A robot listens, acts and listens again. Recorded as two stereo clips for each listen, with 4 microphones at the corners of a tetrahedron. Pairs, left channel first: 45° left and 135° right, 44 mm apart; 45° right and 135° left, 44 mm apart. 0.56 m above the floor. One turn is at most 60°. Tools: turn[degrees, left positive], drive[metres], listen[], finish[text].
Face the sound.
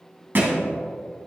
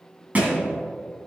Thought: The thud: 175° right.
Action: turn[-60]
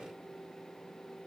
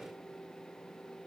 Thought: Nothing new. It was at 115° right.
Action: turn[-60]
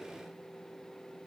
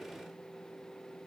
Thought: Nothing new. It was at 55° right.
Action: turn[-55]
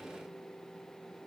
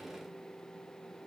Action: finish[Facing where the thud came from. I can't hear it now.]